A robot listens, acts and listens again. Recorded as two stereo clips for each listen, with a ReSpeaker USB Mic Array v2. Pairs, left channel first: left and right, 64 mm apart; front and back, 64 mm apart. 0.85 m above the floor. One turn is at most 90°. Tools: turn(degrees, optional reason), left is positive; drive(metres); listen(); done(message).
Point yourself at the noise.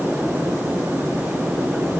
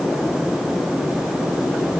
listen()
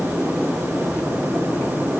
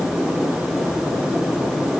listen()
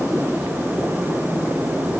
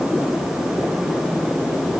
done("I can't make out anything to turn to.")